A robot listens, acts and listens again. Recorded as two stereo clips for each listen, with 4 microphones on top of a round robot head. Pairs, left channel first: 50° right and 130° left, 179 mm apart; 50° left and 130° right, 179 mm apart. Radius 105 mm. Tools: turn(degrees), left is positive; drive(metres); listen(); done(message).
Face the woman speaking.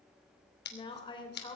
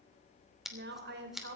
turn(degrees=-115)
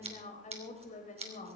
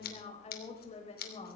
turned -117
done("Facing the woman speaking.")